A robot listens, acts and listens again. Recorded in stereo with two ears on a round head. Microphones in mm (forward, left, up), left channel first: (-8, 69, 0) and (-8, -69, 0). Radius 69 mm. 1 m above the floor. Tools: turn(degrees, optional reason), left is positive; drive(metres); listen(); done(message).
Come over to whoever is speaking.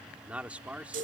turn(degrees=-30)
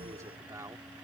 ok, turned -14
turn(degrees=-160, reason="So it is at 160° right.")
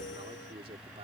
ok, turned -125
turn(degrees=-35, reason="The man speaking is now 35° right.")
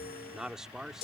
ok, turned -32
drive(metres=1.0)
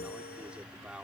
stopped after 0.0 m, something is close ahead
done("Blocked. The man speaking is further on, straight ahead.")